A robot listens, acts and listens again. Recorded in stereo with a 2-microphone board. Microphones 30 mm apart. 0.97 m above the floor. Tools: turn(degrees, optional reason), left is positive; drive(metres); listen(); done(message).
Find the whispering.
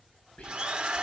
turn(degrees=40, reason="The whispering: about 40° left or 140° left.")
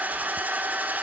listen()
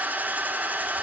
listen()
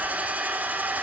done("I heard whispering, but can't make it out now. It was about straight ahead or 100° left.")